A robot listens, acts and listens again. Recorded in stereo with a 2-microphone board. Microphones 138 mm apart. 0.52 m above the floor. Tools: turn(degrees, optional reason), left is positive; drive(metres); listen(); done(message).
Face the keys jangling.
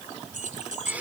turn(degrees=-70, reason="The keys jangling: about 70° right or 110° right.")
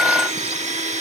listen()
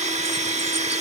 listen()
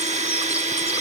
done("I heard keys jangling, but can't make it out now. It was about straight ahead or 40° right.")